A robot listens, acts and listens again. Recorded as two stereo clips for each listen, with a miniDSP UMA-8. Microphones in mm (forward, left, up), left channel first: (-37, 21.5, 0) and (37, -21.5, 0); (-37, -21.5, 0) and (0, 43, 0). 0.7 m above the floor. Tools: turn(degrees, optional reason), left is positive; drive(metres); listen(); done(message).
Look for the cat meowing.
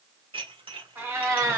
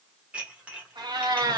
turn(degrees=30, reason="The cat meowing: 30° left.")
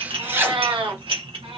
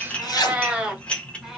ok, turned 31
turn(degrees=-20, reason="The cat meowing is now 20° right.")
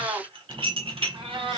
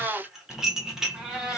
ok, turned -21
turn(degrees=-25, reason="The cat meowing is now 25° right.")
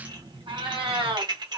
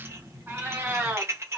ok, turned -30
turn(degrees=-10, reason="The cat meowing is now 10° right.")
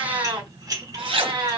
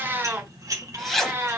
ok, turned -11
done("Facing the cat meowing, 2 to 4 m away.")